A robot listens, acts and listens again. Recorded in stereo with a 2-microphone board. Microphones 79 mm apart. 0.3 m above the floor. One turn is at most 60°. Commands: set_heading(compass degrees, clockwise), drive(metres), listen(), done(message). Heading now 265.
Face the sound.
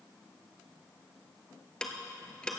set_heading(235)
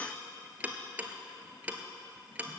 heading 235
set_heading(255)
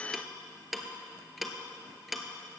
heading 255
done("Facing the ticking.")